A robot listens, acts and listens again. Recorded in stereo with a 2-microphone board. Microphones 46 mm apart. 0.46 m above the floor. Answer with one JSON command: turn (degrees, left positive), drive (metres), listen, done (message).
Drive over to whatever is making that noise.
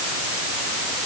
{"listen": true}
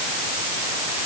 {"listen": true}
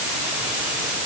{"done": "I can't make out anything."}